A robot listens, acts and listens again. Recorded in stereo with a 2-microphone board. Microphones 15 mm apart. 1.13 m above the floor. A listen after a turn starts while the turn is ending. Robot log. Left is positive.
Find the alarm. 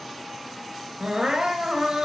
cmd idle
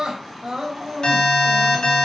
note: The alarm: about 50° left or 130° left.
cmd yaw +50
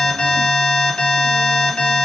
note: So it is at 80° left.
cmd yaw +80
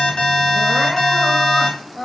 note: The alarm is now 15° left.
cmd yaw +15
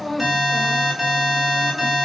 end: Found it: an alarm, straight ahead, 2 to 4 m away.